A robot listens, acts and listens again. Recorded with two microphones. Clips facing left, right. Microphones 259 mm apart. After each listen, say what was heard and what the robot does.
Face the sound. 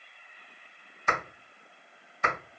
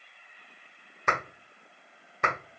The clap: about 70° right or 110° right. Turn 70° right.
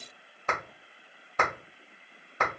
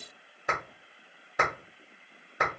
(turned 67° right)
So it is at 15° right. Turn 15° right.
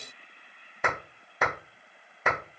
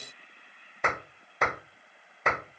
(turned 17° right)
Found it: a clap, straight ahead.